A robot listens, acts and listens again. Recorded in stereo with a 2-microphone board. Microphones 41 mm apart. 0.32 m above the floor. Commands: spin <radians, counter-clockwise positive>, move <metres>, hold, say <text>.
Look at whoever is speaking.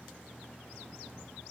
hold
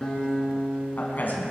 spin 0.79
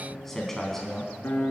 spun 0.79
spin 0.17
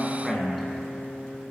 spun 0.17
say Facing the man speaking.